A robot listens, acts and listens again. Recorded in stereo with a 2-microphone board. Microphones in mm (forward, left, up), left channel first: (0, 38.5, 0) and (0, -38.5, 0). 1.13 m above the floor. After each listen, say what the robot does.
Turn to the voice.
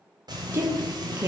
Turn 35° right.
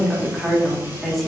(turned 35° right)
Found it: a woman speaking, straight ahead.